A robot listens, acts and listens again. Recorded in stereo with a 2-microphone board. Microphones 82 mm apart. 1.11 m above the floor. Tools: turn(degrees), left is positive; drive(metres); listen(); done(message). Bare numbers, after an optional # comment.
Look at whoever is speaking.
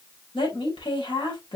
turn(90)
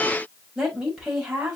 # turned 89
# So it is at 10° right.
turn(-10)
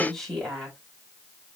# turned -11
done("Found it: a woman speaking, straight ahead, over 4 m away.")